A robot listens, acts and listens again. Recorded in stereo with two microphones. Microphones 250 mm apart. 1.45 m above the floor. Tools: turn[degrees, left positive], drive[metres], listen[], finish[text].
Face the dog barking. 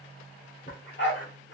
Thought: The dog barking: about 50° left or 130° left.
Action: turn[50]
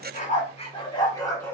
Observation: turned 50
Thought: So it is at 10° left.
Action: turn[10]
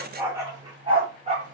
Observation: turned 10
Thought: The dog barking is now 25° right.
Action: turn[-25]
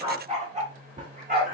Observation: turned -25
Thought: The dog barking is now 35° right.
Action: turn[-35]
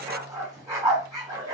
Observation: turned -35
Thought: The dog barking is now 15° right.
Action: turn[-15]
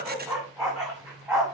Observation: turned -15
Action: finish[Found it: a dog barking, straight ahead.]